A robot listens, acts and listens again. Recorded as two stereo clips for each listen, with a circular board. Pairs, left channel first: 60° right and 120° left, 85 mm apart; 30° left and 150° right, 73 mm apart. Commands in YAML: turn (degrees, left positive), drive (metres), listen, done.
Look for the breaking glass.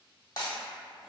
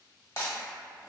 turn: -15
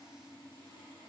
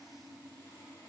done: "I heard breaking glass from this way, but can't make it out now."